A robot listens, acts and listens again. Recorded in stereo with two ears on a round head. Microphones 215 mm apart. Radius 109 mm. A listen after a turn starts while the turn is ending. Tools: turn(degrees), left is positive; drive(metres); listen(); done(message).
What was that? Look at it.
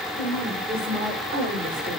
turn(degrees=-35)
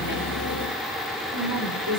turn(degrees=-95)
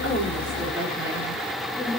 turn(degrees=-10)
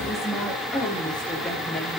done("Found it: a woman speaking, straight ahead, over 4 m away.")